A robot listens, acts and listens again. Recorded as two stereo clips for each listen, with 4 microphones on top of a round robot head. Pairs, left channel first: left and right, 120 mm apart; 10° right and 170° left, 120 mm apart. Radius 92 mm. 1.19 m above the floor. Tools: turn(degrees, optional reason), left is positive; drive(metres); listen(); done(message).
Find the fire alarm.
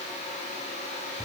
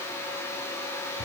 listen()
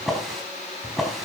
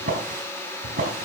listen()
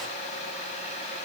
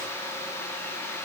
done("I can't make out a fire alarm to turn to.")